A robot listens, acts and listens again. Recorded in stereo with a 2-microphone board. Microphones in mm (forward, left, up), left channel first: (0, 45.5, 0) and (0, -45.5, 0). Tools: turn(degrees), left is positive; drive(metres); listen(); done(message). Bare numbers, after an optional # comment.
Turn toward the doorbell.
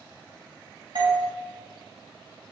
# The doorbell: about 60° right or 120° right.
turn(-60)
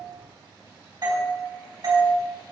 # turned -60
# So it is at 50° right.
turn(-50)
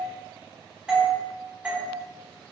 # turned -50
# The doorbell is now 10° right.
turn(-10)
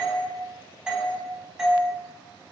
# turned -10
done("Facing the doorbell.")